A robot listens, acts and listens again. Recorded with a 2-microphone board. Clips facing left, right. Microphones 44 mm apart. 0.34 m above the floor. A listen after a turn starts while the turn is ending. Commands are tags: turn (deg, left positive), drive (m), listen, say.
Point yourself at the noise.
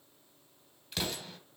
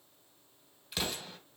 <turn deg="-30"/>
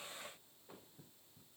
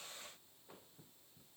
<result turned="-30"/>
<listen/>
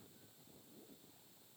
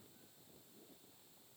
<say>I heard an explosion, but can't make it out now. It was about 25° left or 145° right.</say>